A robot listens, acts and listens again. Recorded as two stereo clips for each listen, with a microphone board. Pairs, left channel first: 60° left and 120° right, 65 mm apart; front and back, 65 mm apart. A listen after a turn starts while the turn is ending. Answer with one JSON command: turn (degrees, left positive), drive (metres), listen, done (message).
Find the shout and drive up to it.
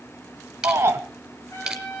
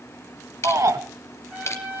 {"turn": -160}
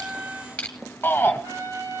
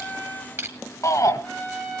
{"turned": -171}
{"turn": 10}
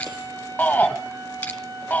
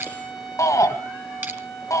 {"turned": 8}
{"drive": 1.0}
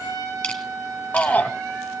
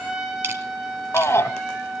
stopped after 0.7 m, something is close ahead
{"turn": 10}
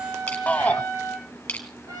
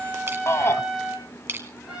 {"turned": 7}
{"done": "Arrived at the shout, straight ahead."}